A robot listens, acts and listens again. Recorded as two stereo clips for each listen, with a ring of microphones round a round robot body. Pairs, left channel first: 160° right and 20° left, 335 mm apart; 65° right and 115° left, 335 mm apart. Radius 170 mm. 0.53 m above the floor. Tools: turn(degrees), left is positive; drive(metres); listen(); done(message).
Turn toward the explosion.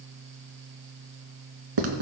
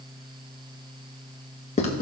listen()
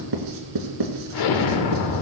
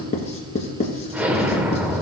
turn(degrees=-160)
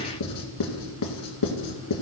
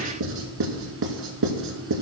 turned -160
done("I heard an explosion from this way, but can't make it out now.")